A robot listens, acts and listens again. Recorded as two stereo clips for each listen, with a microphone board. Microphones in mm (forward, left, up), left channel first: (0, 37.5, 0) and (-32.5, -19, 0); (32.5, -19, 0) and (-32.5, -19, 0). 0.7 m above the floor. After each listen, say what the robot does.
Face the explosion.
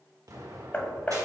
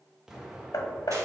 Turn 95° right.
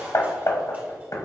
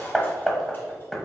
Facing where the explosion came from. I can't hear it now.